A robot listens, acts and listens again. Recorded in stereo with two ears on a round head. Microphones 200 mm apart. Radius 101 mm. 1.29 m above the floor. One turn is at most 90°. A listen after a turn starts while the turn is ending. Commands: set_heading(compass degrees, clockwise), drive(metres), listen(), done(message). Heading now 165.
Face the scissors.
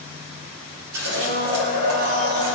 set_heading(240)
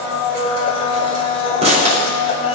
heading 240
set_heading(270)
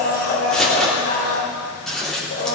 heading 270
done("Found it: scissors, straight ahead.")